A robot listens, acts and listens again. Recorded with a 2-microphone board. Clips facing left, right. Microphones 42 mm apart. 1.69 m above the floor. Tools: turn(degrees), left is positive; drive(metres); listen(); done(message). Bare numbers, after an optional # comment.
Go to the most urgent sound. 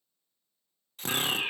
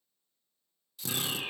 # The fire alarm: about 50° left or 130° left.
turn(50)
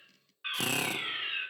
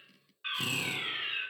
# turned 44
drive(1.0)
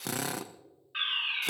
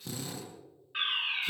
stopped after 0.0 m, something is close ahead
done("Blocked. The fire alarm is further on, straight ahead.")